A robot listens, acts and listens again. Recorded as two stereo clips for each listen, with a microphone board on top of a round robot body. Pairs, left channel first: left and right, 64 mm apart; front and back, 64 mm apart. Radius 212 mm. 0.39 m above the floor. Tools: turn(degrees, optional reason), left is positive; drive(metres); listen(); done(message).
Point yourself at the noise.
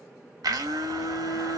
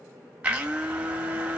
turn(degrees=-110, reason="The blender: 110° right.")
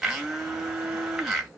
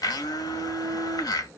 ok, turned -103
done("Found it: a blender, straight ahead.")